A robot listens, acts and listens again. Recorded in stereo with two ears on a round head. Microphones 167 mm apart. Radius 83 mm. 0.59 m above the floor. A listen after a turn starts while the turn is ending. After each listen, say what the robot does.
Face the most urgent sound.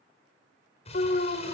Turn 45° left.
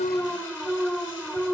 Found it: an alarm, straight ahead, 1 to 2 m away.